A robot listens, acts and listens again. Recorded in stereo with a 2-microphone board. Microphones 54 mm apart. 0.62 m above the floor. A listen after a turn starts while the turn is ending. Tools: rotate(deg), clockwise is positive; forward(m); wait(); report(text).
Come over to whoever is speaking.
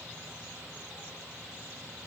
wait()
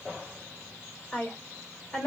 rotate(-30)
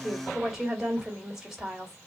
rotate(15)
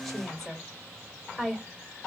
forward(1.0)
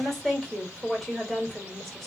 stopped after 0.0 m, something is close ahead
report("Something is in my way. I am facing the woman speaking but have not reached it.")